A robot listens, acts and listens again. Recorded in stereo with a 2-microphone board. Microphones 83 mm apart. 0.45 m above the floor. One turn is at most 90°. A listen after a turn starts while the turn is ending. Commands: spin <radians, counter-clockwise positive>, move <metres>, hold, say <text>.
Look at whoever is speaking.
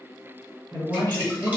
spin -0.96
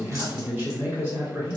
spin -0.44
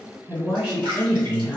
spin -0.26
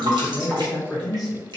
say Facing the man speaking, 1 to 2 m away.